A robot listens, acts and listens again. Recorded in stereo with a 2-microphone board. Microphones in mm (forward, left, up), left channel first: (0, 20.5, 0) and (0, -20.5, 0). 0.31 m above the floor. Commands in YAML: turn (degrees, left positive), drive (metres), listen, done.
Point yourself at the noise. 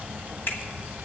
turn: 60
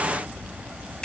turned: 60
listen: true
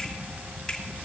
turn: 20
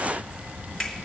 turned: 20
done: "Found it: a finger snap, straight ahead."